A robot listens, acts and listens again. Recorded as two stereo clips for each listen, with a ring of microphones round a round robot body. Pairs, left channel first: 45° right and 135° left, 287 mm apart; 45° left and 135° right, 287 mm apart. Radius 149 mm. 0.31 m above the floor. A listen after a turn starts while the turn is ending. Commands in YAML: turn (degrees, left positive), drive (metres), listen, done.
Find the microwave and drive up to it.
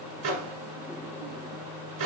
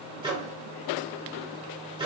turn: 150
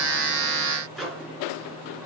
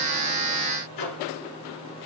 turn: 45
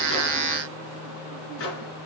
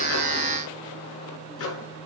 drive: 1.0
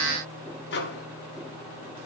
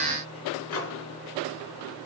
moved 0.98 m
drive: 1.0
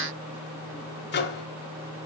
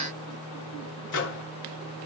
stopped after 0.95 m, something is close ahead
done: "Arrived at the microwave, straight ahead."